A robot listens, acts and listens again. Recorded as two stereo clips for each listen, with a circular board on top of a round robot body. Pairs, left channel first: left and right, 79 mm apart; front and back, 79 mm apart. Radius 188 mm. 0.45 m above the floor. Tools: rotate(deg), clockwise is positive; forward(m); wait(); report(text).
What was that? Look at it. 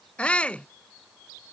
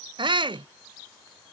rotate(-165)
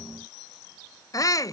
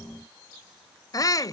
rotate(-45)
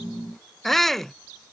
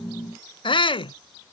report("Facing the shout.")